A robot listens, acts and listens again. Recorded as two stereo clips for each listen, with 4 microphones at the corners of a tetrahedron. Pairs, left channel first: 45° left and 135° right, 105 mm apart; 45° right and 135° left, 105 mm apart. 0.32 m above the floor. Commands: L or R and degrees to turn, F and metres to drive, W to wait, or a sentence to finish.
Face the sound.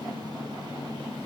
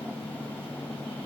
W
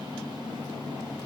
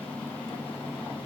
W
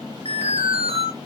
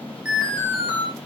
R145
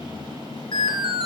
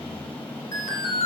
Found it: an alarm, straight ahead, over 4 m away.